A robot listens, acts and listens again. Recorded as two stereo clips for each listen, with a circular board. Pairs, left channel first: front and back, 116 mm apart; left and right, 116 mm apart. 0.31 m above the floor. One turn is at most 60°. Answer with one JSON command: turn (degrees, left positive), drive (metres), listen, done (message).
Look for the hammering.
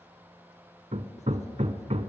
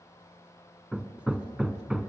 {"turn": -60}
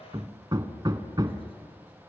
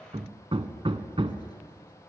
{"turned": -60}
{"turn": -60}
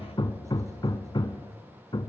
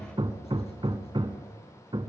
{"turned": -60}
{"turn": -45}
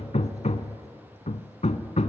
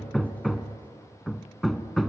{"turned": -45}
{"done": "Facing the hammering."}